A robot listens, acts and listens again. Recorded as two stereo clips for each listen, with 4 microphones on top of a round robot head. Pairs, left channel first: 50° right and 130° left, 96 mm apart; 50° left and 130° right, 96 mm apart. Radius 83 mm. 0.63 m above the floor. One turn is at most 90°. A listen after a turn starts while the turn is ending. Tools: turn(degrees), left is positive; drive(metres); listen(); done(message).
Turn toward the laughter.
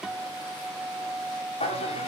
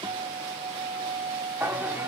turn(degrees=-55)
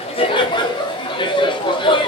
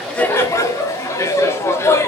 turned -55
turn(degrees=-15)
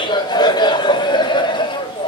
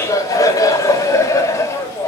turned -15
turn(degrees=-10)
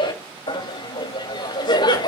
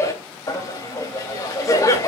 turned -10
done("Found it: laughter, straight ahead.")